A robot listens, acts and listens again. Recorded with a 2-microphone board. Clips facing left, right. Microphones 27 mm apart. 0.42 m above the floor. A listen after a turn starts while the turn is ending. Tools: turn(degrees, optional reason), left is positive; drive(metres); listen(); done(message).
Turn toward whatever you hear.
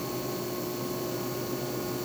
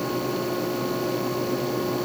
listen()
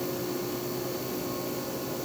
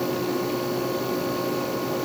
listen()
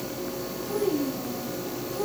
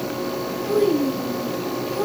turn(degrees=-60, reason="The child speaking: about 60° right or 120° right.")
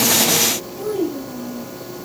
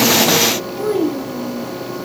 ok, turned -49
turn(degrees=-45, reason="So it is at 45° right.")
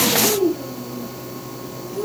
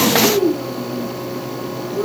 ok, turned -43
turn(degrees=-10, reason="The child speaking is now 10° right.")
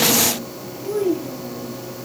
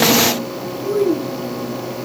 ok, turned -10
done("Found it: a child speaking, straight ahead, 1 to 2 m away.")